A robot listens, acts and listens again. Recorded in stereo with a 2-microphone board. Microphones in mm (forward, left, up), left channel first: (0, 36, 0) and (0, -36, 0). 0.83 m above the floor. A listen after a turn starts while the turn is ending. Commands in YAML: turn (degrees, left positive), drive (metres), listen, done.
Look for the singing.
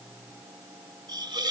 listen: true
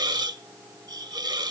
listen: true
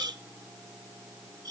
done: "I can't make out singing, only a hiss."